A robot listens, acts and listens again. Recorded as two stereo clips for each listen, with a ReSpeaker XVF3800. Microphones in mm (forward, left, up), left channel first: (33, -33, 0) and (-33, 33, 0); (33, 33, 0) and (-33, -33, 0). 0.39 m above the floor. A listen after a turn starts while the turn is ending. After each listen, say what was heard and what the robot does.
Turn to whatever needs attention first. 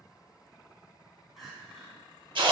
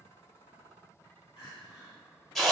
The crying: 45° left. Turn 45° left.
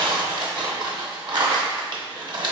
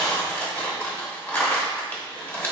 Keep listening.
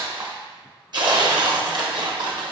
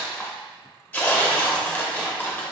Keep listening.
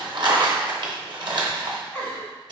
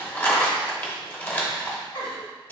The crying is now 25° left. Turn 25° left.
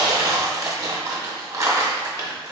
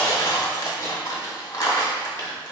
Keep listening.
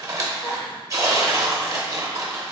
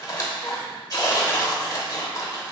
Keep listening.
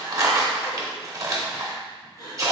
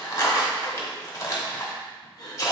Facing the crying, 1 to 2 m away.